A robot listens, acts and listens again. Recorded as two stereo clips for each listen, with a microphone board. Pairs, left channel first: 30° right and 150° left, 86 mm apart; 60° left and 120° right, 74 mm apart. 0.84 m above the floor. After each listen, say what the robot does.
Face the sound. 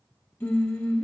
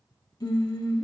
Turn 35° left.
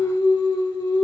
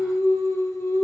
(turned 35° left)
Turn 10° left.
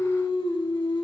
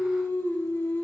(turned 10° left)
Facing the singing.